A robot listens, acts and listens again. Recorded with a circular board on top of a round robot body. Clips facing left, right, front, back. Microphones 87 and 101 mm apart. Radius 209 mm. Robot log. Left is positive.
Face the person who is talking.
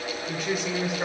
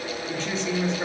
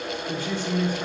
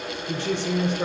note: The woman speaking: 170° left.
cmd yaw +170
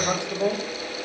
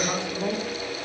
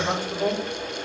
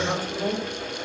note: The woman speaking is now 70° left.
cmd yaw +70
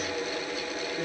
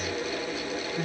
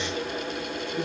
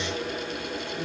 cmd idle
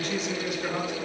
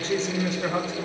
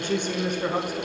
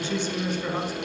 note: The woman speaking is now 35° right.
cmd yaw -35
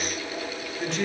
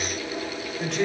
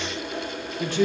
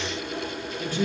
end: Facing the woman speaking.